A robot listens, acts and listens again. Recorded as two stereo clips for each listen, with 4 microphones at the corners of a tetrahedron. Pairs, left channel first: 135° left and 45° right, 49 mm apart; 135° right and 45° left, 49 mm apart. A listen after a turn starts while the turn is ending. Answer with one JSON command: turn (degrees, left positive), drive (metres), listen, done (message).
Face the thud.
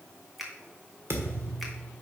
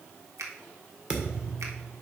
{"turn": -20}
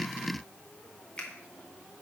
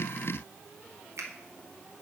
{"done": "I heard a thud from this way, but can't make it out now."}